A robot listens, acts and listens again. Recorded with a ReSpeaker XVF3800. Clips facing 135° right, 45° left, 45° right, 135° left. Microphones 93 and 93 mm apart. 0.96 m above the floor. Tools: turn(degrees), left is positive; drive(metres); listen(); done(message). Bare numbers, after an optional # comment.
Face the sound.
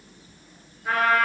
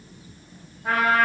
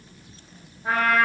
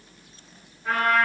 # The trumpet: 15° left.
turn(15)
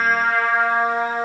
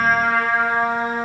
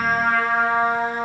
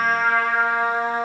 done("Facing the trumpet, 1 to 2 m away.")